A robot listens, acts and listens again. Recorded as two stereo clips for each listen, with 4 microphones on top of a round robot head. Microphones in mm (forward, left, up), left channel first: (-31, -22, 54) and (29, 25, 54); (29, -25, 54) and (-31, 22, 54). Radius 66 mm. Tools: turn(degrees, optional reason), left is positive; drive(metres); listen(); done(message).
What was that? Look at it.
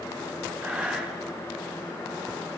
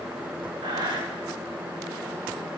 turn(degrees=115, reason="The breathing: 115° left.")
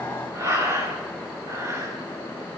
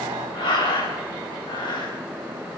turn(degrees=-15, reason="The breathing is now 15° right.")
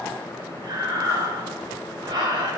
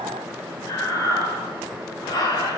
done("Found it: breathing, straight ahead, over 4 m away.")